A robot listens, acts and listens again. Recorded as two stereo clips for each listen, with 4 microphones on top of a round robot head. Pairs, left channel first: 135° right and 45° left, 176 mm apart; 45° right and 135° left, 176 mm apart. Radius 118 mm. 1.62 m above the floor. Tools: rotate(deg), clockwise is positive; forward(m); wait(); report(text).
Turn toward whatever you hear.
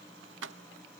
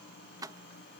rotate(-60)
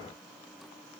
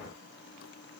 wait()
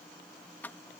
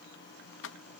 rotate(55)
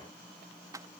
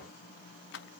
rotate(25)
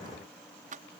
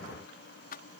report("Found it: keys jangling, straight ahead.")